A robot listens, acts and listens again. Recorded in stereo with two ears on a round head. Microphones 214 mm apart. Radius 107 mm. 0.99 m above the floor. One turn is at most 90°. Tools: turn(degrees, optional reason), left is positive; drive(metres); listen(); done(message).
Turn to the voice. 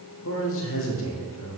turn(degrees=60, reason="The man speaking: about 60° left or 120° left.")
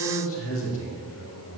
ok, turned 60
turn(degrees=60, reason="So it is at 60° left.")
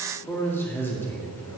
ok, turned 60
turn(degrees=10, reason="The man speaking is now 10° left.")
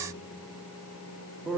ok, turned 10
done("Found it: a man speaking, straight ahead.")